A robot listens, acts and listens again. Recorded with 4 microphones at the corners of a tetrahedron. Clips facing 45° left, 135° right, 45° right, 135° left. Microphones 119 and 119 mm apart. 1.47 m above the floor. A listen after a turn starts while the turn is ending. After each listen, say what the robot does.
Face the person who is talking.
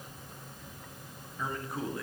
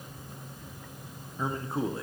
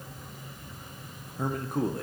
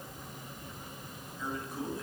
Turn 75° right.
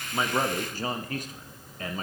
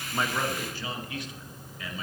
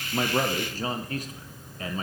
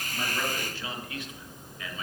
Found it: a man speaking, straight ahead.